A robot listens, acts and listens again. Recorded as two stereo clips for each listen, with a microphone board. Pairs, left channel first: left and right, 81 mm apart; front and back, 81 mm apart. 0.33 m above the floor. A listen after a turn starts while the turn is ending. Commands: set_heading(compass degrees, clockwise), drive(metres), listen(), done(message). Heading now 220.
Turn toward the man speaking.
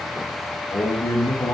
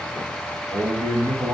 set_heading(85)
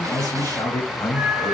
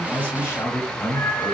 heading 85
set_heading(35)
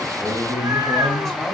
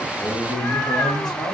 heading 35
done("Facing the man speaking.")